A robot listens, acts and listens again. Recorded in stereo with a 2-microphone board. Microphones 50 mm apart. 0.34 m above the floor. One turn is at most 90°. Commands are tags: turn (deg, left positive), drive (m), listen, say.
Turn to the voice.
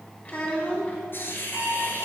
<turn deg="30"/>
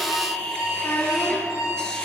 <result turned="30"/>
<turn deg="90"/>
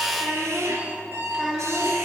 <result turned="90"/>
<say>Found it: a child speaking, straight ahead, 2 to 4 m away.</say>